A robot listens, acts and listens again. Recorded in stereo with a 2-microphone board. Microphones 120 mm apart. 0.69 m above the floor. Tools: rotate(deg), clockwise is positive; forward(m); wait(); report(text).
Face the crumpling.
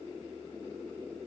wait()
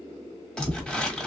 rotate(-30)
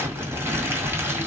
rotate(20)
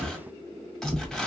report("Facing the crumpling, 1 to 2 m away.")